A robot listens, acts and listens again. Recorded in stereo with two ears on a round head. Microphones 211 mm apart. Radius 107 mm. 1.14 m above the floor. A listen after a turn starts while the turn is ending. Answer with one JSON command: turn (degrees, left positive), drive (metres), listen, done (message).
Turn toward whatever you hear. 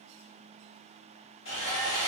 {"turn": 55}
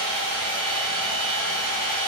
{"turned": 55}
{"turn": 45}
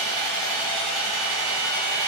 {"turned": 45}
{"done": "Found it: sawing, straight ahead, 1 to 2 m away."}